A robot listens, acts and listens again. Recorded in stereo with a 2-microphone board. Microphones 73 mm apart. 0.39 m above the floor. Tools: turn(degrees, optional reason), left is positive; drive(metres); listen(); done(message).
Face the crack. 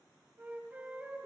listen()
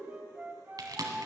turn(degrees=-60, reason="The crack: about 60° right or 120° right.")
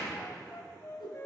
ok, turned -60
listen()
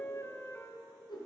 done("I heard a crack, but can't make it out now. It was about straight ahead or 60° right.")